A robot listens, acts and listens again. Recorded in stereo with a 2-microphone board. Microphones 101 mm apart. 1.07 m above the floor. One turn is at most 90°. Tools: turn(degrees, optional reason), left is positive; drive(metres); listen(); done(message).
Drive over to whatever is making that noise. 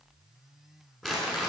turn(degrees=30)
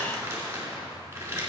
turn(degrees=-25, reason="So it is at 25° right.")
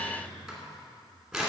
drive(metres=1.0)
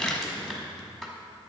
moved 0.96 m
drive(metres=1.0)
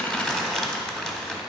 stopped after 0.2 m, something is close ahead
done("I am next to the crumpling.")